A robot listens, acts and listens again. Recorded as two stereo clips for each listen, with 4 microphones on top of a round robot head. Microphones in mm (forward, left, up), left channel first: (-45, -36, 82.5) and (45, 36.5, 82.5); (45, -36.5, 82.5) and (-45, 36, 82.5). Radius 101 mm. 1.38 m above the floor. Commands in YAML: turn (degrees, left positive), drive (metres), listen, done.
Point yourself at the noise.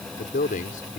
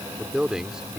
turn: -135
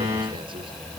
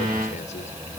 listen: true
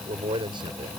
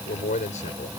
turn: -15
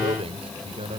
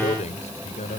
done: "Facing the man speaking."